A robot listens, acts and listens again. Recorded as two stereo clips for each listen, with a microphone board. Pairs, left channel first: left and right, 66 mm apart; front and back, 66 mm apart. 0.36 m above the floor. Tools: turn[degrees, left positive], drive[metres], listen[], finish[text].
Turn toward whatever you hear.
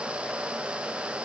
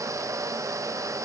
Action: listen[]
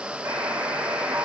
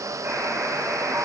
Thought: The buzzer: 135° right.
Action: turn[-135]
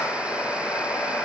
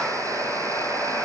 Thought: The buzzer is now 30° left.
Action: turn[30]
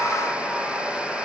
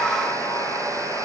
Action: finish[Found it: a buzzer, straight ahead.]